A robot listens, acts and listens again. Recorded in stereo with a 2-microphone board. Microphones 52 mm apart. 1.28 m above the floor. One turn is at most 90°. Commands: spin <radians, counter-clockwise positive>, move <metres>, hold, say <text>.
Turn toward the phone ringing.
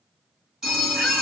spin -0.52
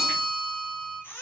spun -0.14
spin -0.35
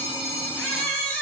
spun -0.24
spin -1.57
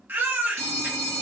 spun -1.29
spin -1.31
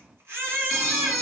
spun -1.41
say Facing the phone ringing, 1 to 2 m away.